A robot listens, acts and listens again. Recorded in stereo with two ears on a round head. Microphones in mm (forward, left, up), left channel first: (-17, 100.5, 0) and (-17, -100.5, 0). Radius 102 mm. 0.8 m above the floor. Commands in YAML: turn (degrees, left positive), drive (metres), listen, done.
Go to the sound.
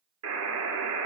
turn: -90
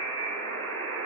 turn: 10
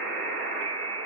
drive: 1.0
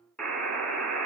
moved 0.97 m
drive: 1.0
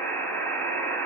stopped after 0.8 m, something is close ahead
turn: 10
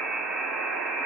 done: "I am next to the buzzer."